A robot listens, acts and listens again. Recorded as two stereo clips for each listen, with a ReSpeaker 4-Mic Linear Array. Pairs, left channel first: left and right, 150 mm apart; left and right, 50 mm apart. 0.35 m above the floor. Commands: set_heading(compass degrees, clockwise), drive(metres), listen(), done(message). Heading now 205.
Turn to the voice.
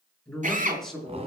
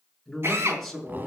set_heading(175)
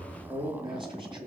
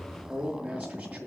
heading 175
set_heading(205)
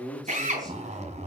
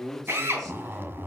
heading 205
done("Facing the man speaking.")